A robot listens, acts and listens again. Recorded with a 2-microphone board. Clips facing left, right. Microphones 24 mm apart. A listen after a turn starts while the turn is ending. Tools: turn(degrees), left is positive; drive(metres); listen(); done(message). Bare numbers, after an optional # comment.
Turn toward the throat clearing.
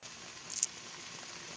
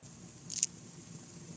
listen()
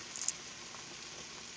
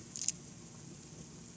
listen()
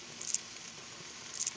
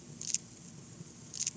done("I can't make out throat clearing, only crumpling and frying.")